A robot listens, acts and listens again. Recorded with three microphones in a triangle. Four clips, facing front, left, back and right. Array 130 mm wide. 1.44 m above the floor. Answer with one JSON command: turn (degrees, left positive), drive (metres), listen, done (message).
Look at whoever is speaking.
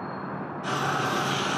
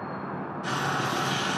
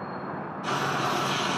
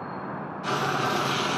{"listen": true}
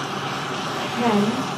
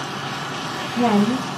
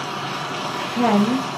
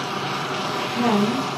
{"turn": 150}
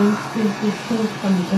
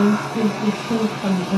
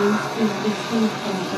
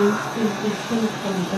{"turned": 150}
{"turn": 35}
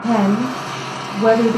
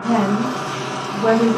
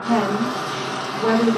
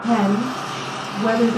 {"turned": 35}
{"turn": -10}
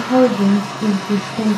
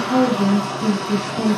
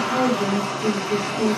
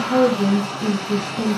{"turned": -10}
{"done": "Found it: a woman speaking, straight ahead, 1 to 2 m away."}